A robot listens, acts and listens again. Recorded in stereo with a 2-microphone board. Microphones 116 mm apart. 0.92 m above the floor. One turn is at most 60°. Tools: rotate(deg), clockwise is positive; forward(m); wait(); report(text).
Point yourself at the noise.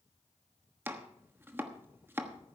rotate(20)
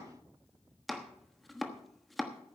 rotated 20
report("Found it: chopping, straight ahead, 1 to 2 m away.")